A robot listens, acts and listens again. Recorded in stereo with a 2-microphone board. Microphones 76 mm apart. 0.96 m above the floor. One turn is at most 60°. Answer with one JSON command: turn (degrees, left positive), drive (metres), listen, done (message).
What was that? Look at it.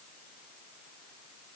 {"listen": true}
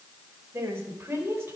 {"turn": -30}
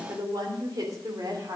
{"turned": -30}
{"turn": -60}
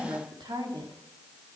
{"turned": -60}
{"turn": -60}
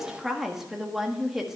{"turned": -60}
{"done": "Found it: a woman speaking, straight ahead, 1 to 2 m away."}